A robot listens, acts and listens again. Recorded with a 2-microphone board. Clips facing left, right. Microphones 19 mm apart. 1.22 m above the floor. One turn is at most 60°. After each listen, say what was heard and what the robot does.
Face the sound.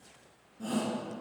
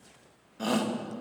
Turn 60° right.
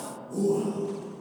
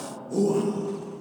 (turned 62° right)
So it is at 40° right. Turn 40° right.
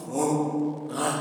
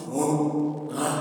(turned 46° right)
Facing the shout, 1 to 2 m away.